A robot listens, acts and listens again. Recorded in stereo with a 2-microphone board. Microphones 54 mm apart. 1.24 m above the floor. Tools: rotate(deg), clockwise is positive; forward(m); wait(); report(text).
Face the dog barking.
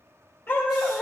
rotate(-30)
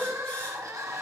wait()
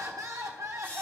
wait()
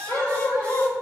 rotate(-40)
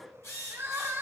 wait()
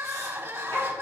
rotate(-110)
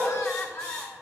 report("Facing the dog barking.")